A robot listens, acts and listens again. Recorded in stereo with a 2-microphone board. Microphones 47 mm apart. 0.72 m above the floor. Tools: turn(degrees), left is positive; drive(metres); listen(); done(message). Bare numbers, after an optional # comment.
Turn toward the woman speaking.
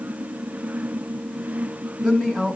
turn(30)
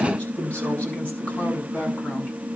# So it is at 150° left.
turn(150)
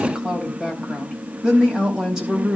# The woman speaking is now 10° right.
turn(-10)
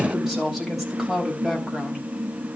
done("Facing the woman speaking, over 4 m away.")